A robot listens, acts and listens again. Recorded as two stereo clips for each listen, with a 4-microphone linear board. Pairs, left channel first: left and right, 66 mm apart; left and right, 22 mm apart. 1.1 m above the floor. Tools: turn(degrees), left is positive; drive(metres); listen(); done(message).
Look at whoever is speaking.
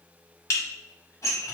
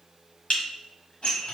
listen()
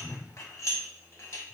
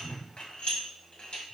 listen()
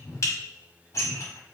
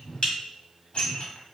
done("I can't make out anyone speaking, only dishes clattering and a whoosh.")